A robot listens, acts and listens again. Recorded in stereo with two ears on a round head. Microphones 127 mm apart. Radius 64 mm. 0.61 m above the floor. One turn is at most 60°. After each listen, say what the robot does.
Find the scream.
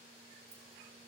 Keep listening.
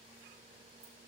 Keep listening.
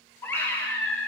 Turn 15° left.
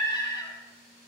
Turn 60° left.
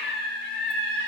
Turn 60° left.
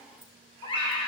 Turn 35° left.
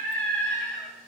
Turn 10° left.
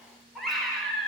Found it: a scream, straight ahead.